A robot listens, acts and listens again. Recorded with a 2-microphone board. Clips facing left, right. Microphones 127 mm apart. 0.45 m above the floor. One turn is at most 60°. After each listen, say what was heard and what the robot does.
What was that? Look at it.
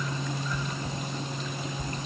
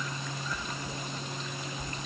The chewing: about 45° left or 135° left. Turn 45° left.
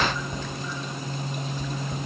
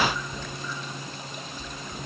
So it is at 85° left. Turn 60° left.
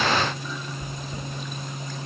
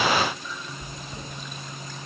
The chewing is now 30° left. Turn 30° left.
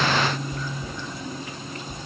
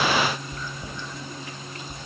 Facing the chewing, 2 to 4 m away.